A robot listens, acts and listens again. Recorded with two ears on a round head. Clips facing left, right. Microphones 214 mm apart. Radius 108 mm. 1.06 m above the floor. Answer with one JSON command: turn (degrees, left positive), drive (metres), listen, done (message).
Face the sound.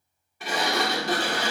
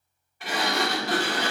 {"turn": 90}
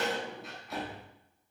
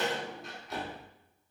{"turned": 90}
{"done": "Found it: a sliding door, straight ahead."}